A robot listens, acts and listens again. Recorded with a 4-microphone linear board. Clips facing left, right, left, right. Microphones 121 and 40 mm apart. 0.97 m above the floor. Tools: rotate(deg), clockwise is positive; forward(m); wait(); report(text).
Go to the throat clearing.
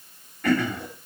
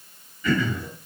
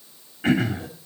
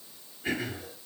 rotate(-90)
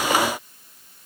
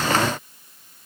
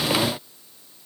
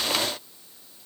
wait()
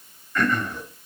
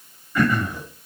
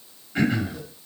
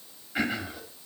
rotate(10)
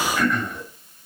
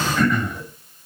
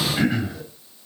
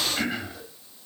forward(1.0)
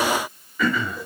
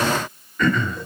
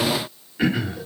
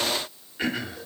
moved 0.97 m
forward(1.0)
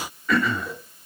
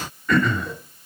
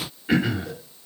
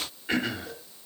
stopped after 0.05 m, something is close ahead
report("Arrived at the throat clearing, straight ahead.")